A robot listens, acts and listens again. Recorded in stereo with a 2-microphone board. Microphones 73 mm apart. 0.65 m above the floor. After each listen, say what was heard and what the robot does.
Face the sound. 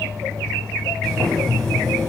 Turn 30° left.
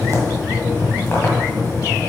So it is at 145° left. Turn 145° left.
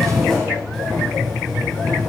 Facing the boiling, 1 to 2 m away.